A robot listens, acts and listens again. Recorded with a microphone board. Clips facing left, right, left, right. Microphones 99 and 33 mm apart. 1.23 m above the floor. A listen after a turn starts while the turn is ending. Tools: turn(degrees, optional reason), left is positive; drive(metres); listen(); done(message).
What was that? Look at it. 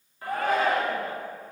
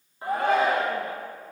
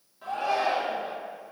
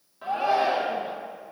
turn(degrees=-25, reason="The shout: about 25° right or 155° right.")
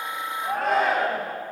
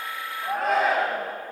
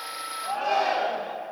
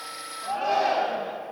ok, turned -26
done("Facing the shout, 1 to 2 m away.")